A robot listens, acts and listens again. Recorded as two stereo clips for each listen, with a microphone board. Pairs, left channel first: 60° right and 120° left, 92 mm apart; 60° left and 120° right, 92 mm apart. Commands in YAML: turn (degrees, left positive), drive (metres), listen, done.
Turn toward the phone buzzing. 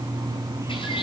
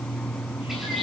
listen: true
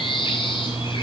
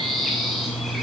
listen: true
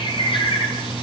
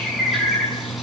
done: "I can't make out a phone buzzing to turn to."